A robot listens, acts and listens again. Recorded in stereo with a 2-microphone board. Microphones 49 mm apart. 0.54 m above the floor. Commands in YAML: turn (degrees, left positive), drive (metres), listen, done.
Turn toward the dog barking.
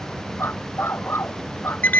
turn: 55
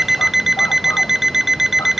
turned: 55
listen: true
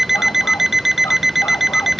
listen: true
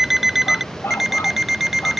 turn: 60
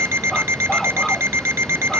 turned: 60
listen: true
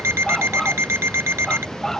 done: "Found it: a dog barking, straight ahead."